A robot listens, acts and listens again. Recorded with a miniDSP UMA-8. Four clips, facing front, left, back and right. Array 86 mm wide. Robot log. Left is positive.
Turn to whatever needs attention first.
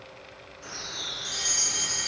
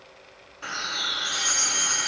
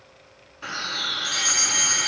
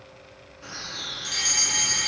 note: The fire alarm: 145° right.
cmd yaw -145
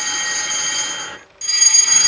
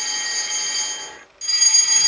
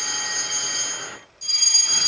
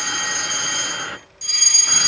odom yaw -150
end: Facing the fire alarm, over 4 m away.